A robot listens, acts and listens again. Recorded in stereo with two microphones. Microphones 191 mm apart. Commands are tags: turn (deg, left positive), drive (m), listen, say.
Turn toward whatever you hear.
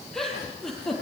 <turn deg="30"/>
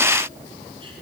<listen/>
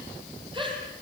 <turn deg="-25"/>
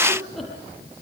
<say>Facing the giggle, over 4 m away.</say>